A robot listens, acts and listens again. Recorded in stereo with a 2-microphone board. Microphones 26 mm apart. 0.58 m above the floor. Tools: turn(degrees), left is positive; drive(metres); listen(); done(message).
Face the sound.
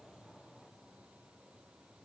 listen()
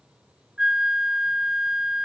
turn(degrees=-30)
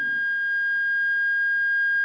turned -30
done("Facing the flute.")